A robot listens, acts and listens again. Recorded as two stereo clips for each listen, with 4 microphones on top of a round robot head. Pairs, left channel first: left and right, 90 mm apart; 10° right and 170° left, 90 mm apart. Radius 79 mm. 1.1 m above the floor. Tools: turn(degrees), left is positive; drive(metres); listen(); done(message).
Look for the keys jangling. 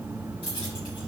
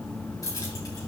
turn(degrees=45)
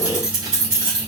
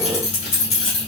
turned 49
turn(degrees=-15)
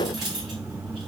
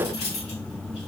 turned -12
done("Facing the keys jangling.")